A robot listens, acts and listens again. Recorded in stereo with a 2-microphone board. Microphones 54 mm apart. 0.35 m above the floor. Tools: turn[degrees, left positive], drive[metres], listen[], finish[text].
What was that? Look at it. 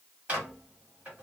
Thought: The microwave: about 25° right or 155° right.
Action: turn[-25]
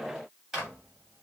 Action: finish[Found it: a microwave, straight ahead.]